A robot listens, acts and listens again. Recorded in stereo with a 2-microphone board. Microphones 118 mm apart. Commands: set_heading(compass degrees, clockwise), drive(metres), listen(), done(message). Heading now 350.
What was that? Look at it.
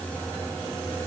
listen()
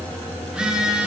set_heading(20)
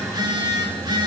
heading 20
set_heading(165)
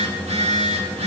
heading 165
set_heading(230)
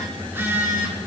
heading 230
set_heading(250)
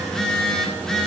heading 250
done("Found it: a phone buzzing, straight ahead, 2 to 4 m away.")